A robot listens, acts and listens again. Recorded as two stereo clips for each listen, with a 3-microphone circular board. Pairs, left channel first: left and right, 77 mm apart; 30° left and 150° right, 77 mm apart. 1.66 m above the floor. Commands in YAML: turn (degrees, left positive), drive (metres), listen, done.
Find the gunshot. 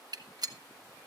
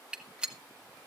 turn: -75
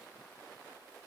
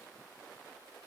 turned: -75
done: "I heard a gunshot from this way, but can't make it out now."